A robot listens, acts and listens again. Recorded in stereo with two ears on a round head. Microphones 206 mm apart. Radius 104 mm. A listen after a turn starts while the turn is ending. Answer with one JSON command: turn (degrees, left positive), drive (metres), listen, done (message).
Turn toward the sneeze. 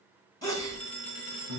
{"turn": 15}
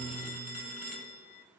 {"listen": true}
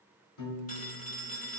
{"done": "I heard a sneeze, but can't make it out now. It was about straight ahead or 150° left."}